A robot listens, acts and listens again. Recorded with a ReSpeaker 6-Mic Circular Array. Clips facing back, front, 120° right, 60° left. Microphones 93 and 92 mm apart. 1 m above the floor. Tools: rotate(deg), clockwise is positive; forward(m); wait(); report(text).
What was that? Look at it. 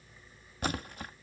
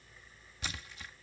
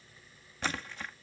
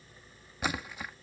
rotate(-140)
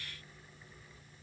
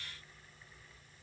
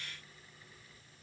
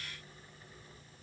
report("Facing where the splash came from. I can't hear it now.")